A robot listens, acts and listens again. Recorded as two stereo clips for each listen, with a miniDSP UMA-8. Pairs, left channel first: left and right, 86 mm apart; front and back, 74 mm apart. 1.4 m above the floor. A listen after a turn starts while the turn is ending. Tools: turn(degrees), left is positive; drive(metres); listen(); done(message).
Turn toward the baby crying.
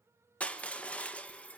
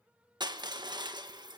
listen()
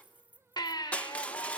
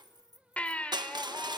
turn(degrees=70)
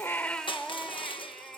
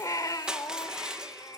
done("Facing the baby crying.")